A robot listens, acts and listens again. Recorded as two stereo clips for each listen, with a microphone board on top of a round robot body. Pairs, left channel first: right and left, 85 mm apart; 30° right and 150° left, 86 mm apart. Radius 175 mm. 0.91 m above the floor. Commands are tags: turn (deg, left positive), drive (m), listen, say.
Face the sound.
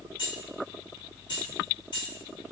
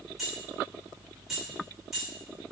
<turn deg="-125"/>
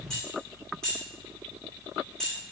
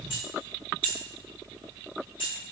<turn deg="-10"/>
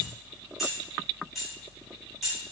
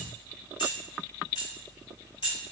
<say>Facing the keys jangling, 1 to 2 m away.</say>